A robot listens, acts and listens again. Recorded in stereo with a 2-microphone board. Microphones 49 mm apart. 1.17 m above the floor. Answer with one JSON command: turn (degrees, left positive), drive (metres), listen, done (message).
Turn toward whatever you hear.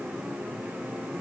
{"listen": true}
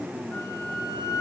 {"turn": 90}
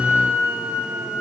{"turn": -20}
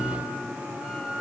{"done": "Facing the flute."}